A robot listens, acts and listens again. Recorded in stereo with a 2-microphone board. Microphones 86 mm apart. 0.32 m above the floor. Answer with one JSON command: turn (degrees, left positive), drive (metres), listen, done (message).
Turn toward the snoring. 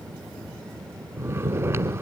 {"turn": -30}
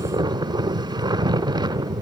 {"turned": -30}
{"turn": -120}
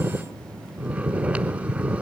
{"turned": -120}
{"turn": -15}
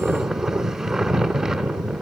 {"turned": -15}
{"done": "Facing the snoring."}